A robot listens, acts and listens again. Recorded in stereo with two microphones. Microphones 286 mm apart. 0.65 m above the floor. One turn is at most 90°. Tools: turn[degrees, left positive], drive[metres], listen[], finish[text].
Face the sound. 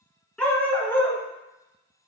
Action: turn[30]
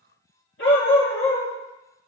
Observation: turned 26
Thought: So it is at 130° left.
Action: turn[90]
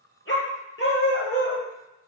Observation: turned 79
Thought: The dog barking is now 40° left.
Action: turn[40]
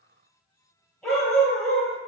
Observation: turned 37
Action: finish[Found it: a dog barking, straight ahead.]